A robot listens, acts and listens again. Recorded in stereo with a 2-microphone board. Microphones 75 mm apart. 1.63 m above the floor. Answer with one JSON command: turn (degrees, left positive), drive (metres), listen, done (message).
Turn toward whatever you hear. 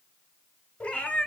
{"turn": 20}
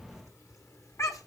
{"turn": 135}
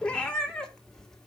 {"turn": 10}
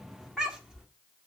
{"turn": -10}
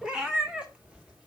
{"turn": -15}
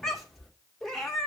{"done": "Found it: a cat meowing, straight ahead, 2 to 4 m away."}